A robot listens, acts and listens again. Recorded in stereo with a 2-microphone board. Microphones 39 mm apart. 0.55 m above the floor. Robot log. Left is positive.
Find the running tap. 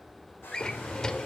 cmd idle
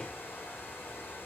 cmd idle
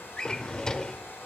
end: I can't make out a running tap, only a hair dryer and a drawer.